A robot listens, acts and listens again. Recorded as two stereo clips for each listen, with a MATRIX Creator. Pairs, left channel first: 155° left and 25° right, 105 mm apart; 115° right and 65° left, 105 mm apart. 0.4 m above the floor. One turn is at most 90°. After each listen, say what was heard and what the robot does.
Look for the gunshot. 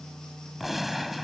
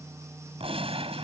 The gunshot: 65° left. Turn 65° left.
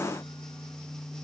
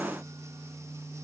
I heard a gunshot from this way, but can't make it out now.